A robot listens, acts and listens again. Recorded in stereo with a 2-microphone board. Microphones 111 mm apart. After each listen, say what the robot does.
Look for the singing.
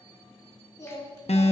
Turn 35° left.
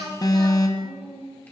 Turn 15° left.
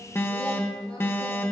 Keep listening.
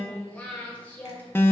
Turn 20° left.
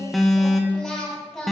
Facing the singing.